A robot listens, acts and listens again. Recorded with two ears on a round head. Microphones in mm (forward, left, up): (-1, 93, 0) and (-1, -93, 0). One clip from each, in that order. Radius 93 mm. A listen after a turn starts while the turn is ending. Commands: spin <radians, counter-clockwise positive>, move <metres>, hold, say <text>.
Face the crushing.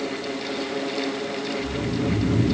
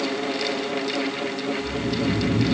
hold
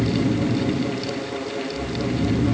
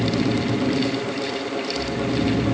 hold
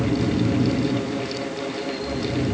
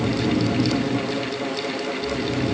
say I can't make out crushing, only snoring.